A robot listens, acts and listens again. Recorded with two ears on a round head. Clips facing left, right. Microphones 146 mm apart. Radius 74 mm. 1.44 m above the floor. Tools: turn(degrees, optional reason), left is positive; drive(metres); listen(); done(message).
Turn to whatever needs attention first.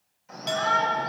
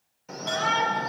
turn(degrees=-65, reason="The shout: about 65° right or 115° right.")
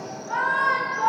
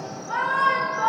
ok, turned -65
done("Found it: a shout, straight ahead.")